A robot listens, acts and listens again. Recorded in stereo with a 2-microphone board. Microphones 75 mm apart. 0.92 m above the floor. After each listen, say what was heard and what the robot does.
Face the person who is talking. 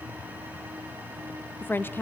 The woman speaking: about 30° left or 150° left. Turn 30° left.
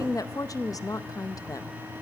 So it is at 115° left. Turn 115° left.
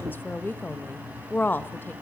The woman speaking is now 30° left. Turn 30° left.
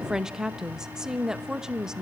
The woman speaking is now 10° right. Turn 10° right.
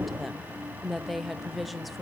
Facing the woman speaking, under 1 m away.